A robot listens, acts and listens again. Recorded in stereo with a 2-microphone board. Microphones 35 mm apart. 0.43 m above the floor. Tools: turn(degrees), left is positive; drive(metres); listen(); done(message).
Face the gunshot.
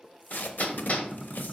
turn(degrees=30)
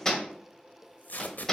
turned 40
listen()
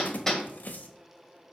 done("I heard a gunshot, but can't make it out now. It was about 25° right or 125° left.")